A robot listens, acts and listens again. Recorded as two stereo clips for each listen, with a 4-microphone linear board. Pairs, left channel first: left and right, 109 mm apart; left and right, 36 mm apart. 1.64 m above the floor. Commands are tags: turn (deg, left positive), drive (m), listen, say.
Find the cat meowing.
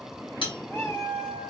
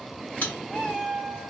<turn deg="20"/>
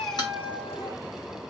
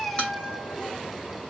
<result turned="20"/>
<turn deg="15"/>
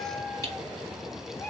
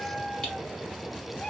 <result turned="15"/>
<turn deg="30"/>
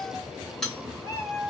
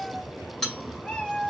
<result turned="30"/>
<turn deg="30"/>
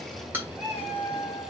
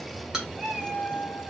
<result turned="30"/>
<say>Facing the cat meowing.</say>